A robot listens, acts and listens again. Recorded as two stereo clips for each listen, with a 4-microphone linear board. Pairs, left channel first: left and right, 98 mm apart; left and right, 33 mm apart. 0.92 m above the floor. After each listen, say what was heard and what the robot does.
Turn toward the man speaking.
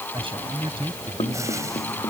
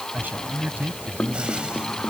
The man speaking: about 65° right or 115° right. Turn 65° right.
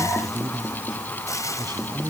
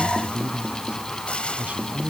So it is at 45° right. Turn 45° right.
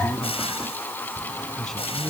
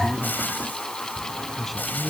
Facing the man speaking.